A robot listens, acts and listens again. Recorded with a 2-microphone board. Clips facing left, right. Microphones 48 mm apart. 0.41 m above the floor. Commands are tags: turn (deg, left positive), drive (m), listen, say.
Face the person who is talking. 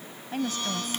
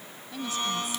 <turn deg="50"/>
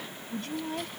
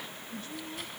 <turn deg="80"/>
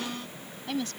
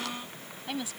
<turn deg="-10"/>
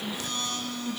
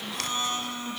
<listen/>
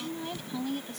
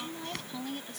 <say>Facing the woman speaking.</say>